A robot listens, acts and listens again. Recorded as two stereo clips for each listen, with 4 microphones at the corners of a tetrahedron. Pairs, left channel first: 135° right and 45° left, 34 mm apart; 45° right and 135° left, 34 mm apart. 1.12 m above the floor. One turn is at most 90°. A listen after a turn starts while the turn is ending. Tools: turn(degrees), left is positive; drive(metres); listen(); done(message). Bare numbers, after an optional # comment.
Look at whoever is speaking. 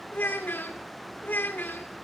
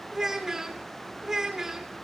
# The child speaking: 150° right.
turn(-90)
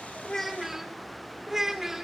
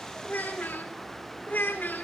# The child speaking is now 35° right.
turn(-35)
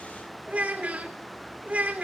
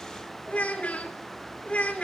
done("Facing the child speaking.")